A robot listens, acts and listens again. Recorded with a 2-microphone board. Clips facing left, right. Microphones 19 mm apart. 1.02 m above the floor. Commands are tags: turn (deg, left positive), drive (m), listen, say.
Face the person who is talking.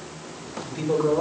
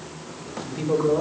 <turn deg="-20"/>
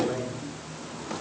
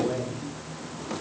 <turn deg="-140"/>
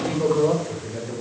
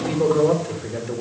<turn deg="-10"/>
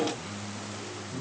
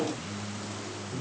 <say>Found it: a man speaking, straight ahead.</say>